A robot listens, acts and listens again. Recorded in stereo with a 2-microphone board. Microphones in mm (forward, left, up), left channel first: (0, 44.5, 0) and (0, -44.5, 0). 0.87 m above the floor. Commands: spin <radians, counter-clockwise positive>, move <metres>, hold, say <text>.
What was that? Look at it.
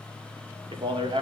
spin -1.22
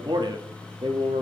spin -1.22
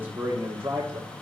spin -0.61
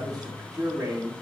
spin -0.17
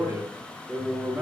say Found it: a man speaking, straight ahead.